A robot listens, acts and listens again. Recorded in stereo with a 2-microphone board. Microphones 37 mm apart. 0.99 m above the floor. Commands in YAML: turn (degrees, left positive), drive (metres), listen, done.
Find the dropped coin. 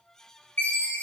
listen: true
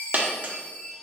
turn: -55
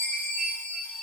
listen: true
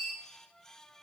done: "I heard a dropped coin, but can't make it out now. It was about straight ahead or 70° right."